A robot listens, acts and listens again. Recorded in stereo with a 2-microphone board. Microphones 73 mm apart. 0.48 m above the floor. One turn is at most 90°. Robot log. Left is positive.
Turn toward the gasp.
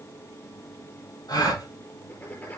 note: The gasp: about 60° left or 120° left.
cmd yaw +60
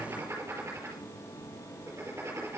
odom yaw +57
cmd idle
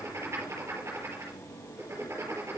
end: I heard a gasp, but can't make it out now. It was about straight ahead or 65° left.